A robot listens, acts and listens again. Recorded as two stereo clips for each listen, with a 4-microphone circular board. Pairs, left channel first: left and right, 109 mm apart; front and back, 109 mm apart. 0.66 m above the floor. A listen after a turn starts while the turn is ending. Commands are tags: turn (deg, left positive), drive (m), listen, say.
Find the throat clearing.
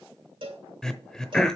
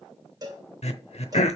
<say>Found it: throat clearing, straight ahead.</say>